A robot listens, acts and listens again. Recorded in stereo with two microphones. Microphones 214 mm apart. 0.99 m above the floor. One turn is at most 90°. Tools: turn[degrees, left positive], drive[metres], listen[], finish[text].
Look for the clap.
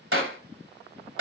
Action: turn[-90]
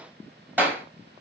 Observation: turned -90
Thought: So it is at 10° right.
Action: turn[-10]
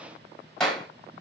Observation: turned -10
Action: finish[Found it: a clap, straight ahead, 2 to 4 m away.]